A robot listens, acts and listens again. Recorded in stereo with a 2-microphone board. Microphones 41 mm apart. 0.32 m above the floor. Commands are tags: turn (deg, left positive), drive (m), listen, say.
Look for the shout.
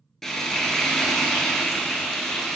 <listen/>
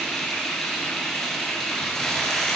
<listen/>
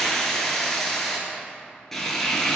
<say>I can't make out a shout to turn to.</say>